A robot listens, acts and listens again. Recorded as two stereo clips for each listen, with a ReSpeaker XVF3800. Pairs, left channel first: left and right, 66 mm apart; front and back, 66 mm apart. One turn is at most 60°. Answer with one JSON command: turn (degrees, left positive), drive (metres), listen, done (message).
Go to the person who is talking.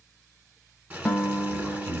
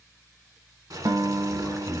{"turn": 40}
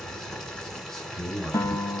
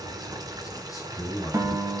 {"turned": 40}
{"turn": 10}
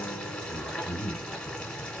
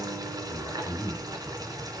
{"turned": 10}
{"drive": 1.0}
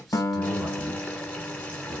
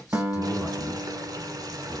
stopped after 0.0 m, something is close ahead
{"listen": true}
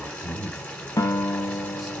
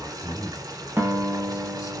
{"done": "Something is in my way. I am facing the man speaking but have not reached it."}